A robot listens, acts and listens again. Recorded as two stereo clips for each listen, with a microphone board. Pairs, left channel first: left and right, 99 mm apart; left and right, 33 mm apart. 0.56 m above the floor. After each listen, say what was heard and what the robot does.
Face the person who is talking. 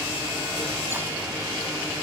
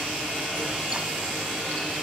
Keep listening.
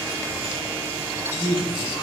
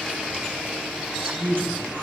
The man speaking: about 70° right or 110° right. Turn 70° right.
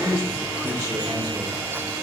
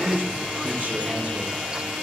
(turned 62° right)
So it is at 35° right. Turn 35° right.
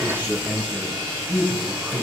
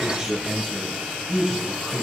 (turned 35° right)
The man speaking is now 20° right. Turn 20° right.
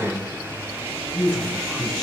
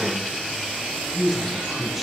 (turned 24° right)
Found it: a man speaking, straight ahead, 2 to 4 m away.